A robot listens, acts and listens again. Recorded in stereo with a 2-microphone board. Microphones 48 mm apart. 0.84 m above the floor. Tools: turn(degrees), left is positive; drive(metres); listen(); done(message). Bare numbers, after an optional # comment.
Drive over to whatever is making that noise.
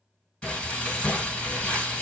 # The frying: about 20° left or 160° left.
turn(20)
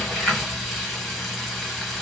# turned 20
drive(1.0)
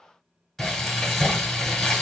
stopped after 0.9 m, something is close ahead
# The frying is now 10° left.
turn(10)
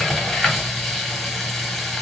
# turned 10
done("Arrived at the frying, straight ahead.")